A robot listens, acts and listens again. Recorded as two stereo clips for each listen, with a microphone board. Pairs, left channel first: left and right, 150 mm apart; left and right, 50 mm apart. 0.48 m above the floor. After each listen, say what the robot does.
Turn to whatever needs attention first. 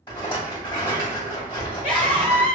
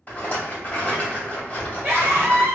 Turn 55° right.
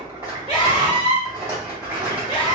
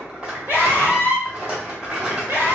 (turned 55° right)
Turn 55° right.
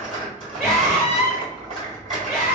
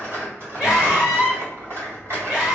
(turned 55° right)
Turn 20° right.
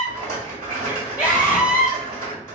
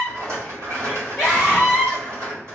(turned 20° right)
Found it: a scream, straight ahead, 1 to 2 m away.